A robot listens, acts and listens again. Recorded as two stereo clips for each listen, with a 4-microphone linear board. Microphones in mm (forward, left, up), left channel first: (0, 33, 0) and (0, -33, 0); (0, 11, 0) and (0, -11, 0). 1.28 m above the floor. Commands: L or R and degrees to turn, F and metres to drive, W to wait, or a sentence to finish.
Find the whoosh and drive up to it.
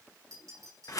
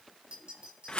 W
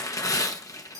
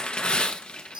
W
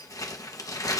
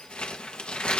I can't make out a whoosh, only tearing paper and a clink.